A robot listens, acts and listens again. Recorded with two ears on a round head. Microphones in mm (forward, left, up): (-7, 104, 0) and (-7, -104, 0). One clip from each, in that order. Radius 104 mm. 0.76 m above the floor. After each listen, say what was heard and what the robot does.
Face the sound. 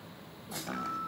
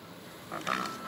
The chopping: about 75° right or 105° right. Turn 75° right.
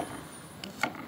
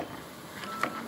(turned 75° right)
Found it: chopping, straight ahead, 2 to 4 m away.